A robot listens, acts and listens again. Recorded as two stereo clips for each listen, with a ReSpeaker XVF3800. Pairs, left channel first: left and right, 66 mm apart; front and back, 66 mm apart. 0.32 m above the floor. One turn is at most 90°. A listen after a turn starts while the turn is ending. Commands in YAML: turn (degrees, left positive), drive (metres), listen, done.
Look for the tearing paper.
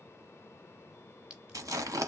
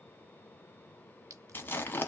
turn: -60
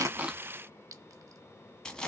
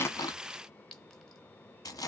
turn: 15
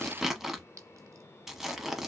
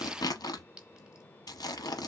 done: "Found it: tearing paper, straight ahead."